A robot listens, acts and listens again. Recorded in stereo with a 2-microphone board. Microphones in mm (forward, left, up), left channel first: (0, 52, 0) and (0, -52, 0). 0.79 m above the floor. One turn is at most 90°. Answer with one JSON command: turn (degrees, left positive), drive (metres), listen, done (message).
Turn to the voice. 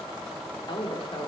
{"turn": 55}
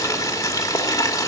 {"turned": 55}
{"listen": true}
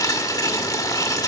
{"listen": true}
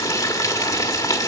{"done": "I heard a woman speaking, but can't make it out now. It was about straight ahead or 70° left."}